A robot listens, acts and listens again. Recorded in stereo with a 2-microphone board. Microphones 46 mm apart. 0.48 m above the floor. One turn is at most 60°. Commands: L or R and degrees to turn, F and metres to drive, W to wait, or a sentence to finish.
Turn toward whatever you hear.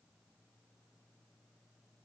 W
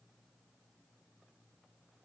W
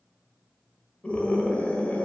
L30
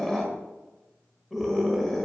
Found it: a scream, straight ahead, 1 to 2 m away.